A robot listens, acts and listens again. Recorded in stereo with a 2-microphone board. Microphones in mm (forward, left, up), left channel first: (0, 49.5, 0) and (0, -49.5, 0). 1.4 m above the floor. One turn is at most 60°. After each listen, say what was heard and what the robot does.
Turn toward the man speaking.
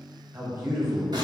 The man speaking: about 25° right or 155° right. Turn 25° right.
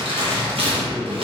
Found it: a man speaking, straight ahead, 1 to 2 m away.